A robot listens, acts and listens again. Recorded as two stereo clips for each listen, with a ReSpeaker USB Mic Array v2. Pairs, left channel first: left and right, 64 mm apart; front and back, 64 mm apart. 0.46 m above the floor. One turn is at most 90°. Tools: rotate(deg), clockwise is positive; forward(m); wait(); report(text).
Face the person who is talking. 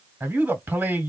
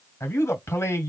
rotate(40)
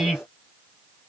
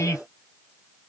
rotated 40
rotate(10)
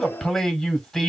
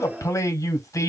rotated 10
report("Found it: a man speaking, straight ahead.")